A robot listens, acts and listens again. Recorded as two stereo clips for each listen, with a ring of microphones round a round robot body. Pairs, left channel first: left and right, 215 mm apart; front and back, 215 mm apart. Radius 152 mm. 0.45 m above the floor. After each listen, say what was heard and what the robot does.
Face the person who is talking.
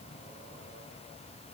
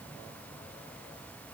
Keep listening.
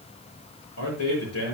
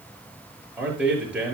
The man speaking: 95° left. Turn 95° left.
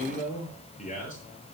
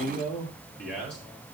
The man speaking is now 35° left. Turn 35° left.
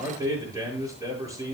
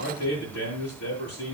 The man speaking is now 15° right. Turn 15° right.
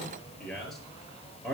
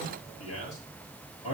Found it: a man speaking, straight ahead.